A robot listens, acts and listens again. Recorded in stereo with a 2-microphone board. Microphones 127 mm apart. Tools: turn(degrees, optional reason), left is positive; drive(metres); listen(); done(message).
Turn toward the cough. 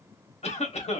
turn(degrees=60, reason="The cough: about 60° left or 120° left.")
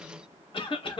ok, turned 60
turn(degrees=50, reason="So it is at 50° left.")
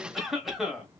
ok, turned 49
done("Facing the cough.")